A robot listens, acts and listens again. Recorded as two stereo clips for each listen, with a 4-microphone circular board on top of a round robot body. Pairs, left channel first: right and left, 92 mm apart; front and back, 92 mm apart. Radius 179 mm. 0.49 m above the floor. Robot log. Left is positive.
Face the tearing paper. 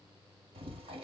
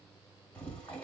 cmd idle
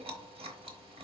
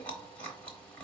cmd idle
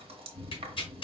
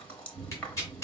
note: The tearing paper: 60° right.
cmd yaw -60
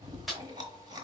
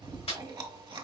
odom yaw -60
end: Facing the tearing paper, 1 to 2 m away.